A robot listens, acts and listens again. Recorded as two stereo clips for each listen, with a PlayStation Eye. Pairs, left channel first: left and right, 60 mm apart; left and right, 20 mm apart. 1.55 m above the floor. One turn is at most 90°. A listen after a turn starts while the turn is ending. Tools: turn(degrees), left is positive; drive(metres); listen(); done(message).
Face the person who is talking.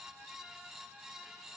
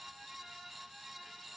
listen()
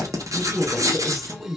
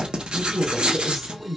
turn(degrees=30)
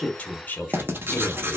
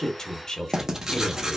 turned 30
turn(degrees=90)
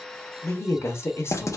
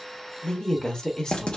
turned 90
turn(degrees=45)
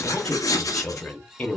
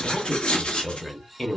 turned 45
turn(degrees=20)
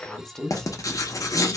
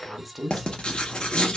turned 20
done("Found it: a woman speaking, straight ahead, 1 to 2 m away.")